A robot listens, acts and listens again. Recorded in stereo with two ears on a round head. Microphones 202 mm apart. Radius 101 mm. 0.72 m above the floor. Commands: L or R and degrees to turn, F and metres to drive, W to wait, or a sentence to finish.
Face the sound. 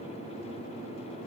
W
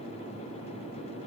W
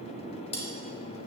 L30
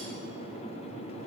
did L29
W
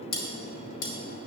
L120
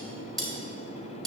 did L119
Found it: cutlery clinking, straight ahead, 2 to 4 m away.